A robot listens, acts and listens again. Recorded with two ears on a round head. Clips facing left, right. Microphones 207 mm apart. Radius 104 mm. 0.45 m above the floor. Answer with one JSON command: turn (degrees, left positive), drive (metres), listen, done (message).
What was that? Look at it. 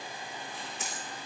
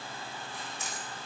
{"turn": 60}
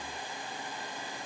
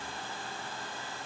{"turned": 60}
{"listen": true}
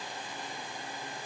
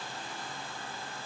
{"done": "I heard a dropped coin, but can't make it out now. It was about straight ahead or 60° left."}